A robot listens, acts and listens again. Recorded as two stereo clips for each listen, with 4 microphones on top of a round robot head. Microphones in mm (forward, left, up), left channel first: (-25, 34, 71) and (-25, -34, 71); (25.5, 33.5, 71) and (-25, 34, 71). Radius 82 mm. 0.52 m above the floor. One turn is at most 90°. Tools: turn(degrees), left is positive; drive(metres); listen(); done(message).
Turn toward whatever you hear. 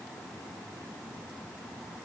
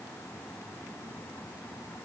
listen()
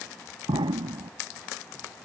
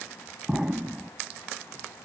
turn(degrees=-90)
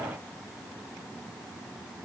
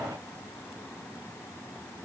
turn(degrees=-10)
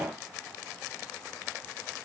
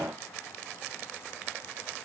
done("I heard an explosion from this way, but can't make it out now.")